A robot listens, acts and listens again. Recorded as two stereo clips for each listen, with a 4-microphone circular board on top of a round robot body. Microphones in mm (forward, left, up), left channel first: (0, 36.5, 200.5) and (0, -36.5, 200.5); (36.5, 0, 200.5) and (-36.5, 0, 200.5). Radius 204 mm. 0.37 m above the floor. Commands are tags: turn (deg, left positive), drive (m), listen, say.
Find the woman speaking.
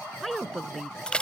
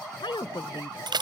<say>Facing the woman speaking.</say>